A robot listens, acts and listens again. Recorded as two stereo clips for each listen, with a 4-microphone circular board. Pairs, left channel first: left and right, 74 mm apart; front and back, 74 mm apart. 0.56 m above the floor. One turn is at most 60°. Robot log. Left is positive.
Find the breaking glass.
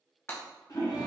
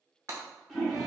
note: The breaking glass: 135° left.
cmd yaw +60
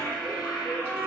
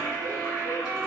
note: Nothing new. It was at 75° left.
cmd yaw +60
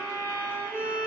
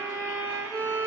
note: Nothing new. It was at 15° left.
cmd yaw +15
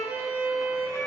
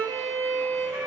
end: I heard breaking glass from this way, but can't make it out now.